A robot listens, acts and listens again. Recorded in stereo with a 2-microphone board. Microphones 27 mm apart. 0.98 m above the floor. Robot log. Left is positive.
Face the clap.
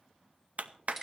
note: The clap: about 65° right or 115° right.
cmd yaw -65
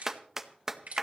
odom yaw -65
note: So it is at 15° right.
cmd yaw -15
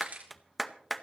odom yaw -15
end: Found it: a clap, straight ahead, under 1 m away.